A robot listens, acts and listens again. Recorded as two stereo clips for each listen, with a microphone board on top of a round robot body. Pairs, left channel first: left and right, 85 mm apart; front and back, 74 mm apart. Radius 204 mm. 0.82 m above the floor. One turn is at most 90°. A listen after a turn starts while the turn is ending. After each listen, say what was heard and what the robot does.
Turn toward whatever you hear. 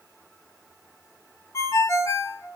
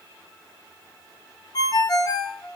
The ringtone: 35° left. Turn 35° left.
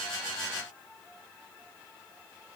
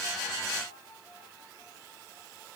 Keep listening.
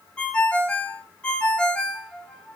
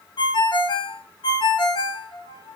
The ringtone is now 15° left. Turn 15° left.
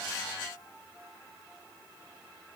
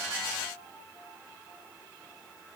Keep listening.
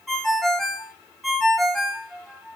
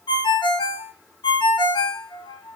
Found it: a ringtone, straight ahead.